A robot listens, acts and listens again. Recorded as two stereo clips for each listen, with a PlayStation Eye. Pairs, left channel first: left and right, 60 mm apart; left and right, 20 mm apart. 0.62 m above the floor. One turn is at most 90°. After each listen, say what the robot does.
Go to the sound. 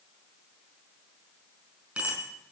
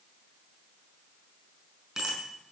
Turn 20° right.
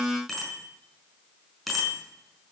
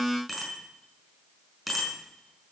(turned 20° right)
Drive 1.0 m forward.
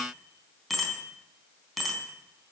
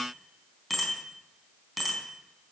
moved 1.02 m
Drive 1.0 m forward.
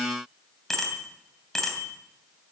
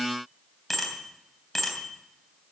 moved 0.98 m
Drive 1.0 m forward.
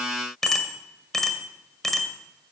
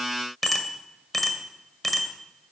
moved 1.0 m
Drive 1.0 m forward.
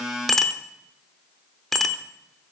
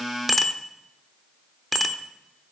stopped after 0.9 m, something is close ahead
I am next to the bicycle bell.